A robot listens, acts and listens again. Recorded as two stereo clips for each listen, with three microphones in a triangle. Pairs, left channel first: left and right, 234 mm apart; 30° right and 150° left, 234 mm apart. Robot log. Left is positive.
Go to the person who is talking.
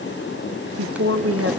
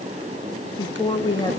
note: The woman speaking: 105° right.
cmd yaw -105
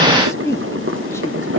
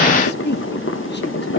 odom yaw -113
note: The woman speaking is now 10° left.
cmd yaw +10
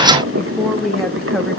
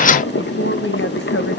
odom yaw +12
cmd fwd 1.0
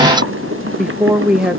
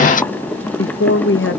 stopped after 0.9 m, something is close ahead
end: Arrived at the woman speaking, straight ahead.